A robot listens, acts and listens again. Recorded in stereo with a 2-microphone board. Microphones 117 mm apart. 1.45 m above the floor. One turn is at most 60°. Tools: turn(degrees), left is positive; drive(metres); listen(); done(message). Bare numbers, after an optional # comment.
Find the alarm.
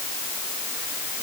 listen()
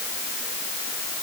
listen()
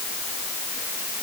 done("I can't make out an alarm.")